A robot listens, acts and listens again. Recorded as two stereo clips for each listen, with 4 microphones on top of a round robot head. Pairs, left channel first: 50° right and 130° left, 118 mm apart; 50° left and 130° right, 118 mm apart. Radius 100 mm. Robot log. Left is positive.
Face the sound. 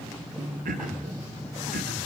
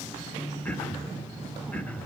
note: The throat clearing: 130° left.
cmd yaw +130
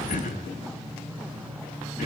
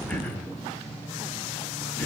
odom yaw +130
note: The throat clearing is now 30° right.
cmd yaw -30
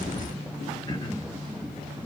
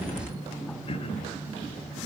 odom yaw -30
cmd idle
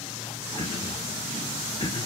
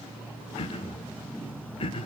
end: Facing the throat clearing.